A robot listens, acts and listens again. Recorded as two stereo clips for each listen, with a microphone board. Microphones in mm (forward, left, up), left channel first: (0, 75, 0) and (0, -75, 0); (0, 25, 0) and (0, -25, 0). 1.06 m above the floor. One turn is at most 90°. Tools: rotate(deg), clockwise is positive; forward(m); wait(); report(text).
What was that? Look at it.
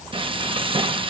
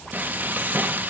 rotate(35)
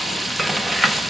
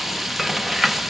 report("Facing the frying, under 1 m away.")